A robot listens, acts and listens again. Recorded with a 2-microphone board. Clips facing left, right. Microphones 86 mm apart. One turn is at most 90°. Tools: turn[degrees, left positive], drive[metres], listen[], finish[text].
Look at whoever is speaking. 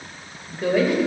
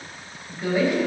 Thought: The woman speaking: about 65° left or 115° left.
Action: turn[65]
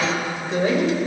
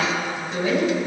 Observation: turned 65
Thought: So it is at 45° left.
Action: turn[45]
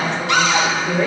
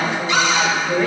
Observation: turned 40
Action: finish[Found it: a woman speaking, straight ahead, 2 to 4 m away.]